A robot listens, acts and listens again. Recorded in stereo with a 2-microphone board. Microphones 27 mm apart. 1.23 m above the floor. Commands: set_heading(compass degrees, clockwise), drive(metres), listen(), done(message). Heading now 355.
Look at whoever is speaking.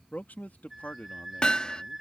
set_heading(265)
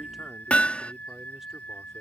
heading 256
set_heading(266)
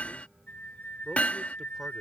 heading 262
listen()
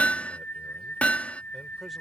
done("I heard a man speaking from this way, but can't make it out now.")